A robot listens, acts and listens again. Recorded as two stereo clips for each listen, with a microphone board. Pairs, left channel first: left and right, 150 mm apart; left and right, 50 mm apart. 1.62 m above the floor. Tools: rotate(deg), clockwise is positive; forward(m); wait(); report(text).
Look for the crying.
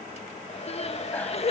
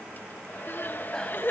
rotate(-40)
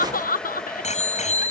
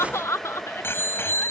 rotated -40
rotate(-95)
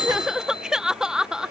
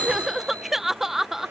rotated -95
report("Found it: crying, straight ahead.")